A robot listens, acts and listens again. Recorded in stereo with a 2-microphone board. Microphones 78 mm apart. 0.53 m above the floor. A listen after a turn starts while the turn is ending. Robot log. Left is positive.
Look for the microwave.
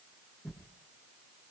cmd idle
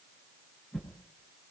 cmd idle
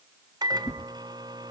note: The microwave: about 55° right or 125° right.
cmd yaw -55
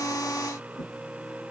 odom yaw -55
note: So it is at 15° right.
cmd yaw -15
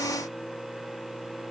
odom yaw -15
end: Facing the microwave, 1 to 2 m away.